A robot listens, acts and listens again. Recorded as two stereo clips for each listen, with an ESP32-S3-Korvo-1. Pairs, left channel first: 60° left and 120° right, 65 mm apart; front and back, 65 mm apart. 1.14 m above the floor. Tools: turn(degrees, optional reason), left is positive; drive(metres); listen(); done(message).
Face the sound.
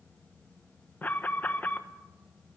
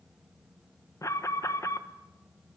done("Found it: an alarm, straight ahead.")